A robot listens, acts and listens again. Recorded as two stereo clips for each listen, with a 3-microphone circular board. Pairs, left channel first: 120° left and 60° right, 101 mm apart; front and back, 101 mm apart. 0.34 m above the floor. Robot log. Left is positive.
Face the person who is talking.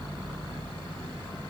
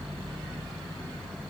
cmd idle
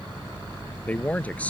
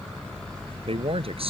note: The man speaking: 165° right.
cmd yaw -165
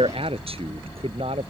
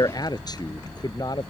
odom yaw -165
note: The man speaking is now 45° right.
cmd yaw -45
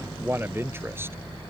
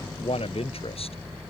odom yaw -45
end: Facing the man speaking.